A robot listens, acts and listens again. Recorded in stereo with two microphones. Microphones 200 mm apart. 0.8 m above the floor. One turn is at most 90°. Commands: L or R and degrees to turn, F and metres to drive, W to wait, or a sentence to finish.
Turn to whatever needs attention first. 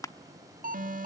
R45
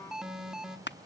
Facing the alarm.